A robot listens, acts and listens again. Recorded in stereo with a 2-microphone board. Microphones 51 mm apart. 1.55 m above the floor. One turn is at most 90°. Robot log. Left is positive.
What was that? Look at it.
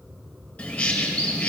note: The bird: about 25° left or 155° left.
cmd yaw +25
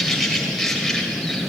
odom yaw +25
end: Facing the bird, 2 to 4 m away.